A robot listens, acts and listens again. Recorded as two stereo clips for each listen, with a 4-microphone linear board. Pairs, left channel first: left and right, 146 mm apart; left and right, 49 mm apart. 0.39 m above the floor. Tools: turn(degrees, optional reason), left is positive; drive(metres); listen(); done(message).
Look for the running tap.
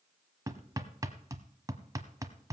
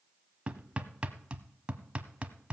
listen()
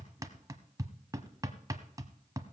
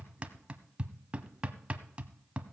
listen()
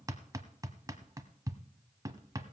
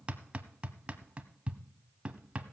done("I can't make out a running tap to turn to.")